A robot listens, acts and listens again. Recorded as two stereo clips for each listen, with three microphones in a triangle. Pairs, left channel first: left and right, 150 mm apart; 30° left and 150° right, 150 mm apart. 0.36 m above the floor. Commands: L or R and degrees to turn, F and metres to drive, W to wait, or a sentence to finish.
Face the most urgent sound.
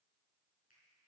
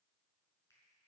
W
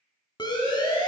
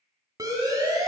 L145
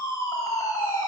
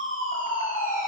L25
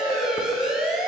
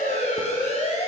Facing the siren.